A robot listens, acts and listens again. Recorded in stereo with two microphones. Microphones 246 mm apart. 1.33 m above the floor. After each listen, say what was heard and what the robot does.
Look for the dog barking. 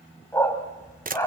Turn 30° left.
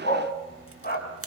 So it is at 140° left. Turn 140° left.
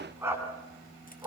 The dog barking is now 10° right. Turn 10° right.
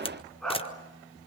Facing the dog barking, over 4 m away.